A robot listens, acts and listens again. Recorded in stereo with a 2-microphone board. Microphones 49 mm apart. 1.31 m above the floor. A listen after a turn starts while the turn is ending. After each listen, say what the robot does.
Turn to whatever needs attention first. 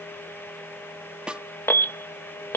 Turn 60° left.
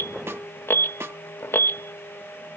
Turn 60° left.
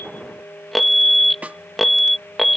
Found it: an alarm, straight ahead.